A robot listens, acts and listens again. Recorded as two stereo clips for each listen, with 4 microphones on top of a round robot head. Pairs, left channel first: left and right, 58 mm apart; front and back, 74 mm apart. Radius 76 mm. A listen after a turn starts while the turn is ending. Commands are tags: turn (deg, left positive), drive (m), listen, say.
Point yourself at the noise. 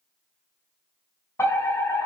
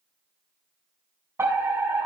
<turn deg="125"/>
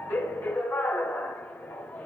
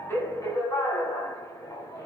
<turn deg="30"/>
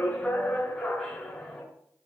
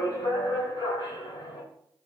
<say>Found it: a fire alarm, straight ahead, over 4 m away.</say>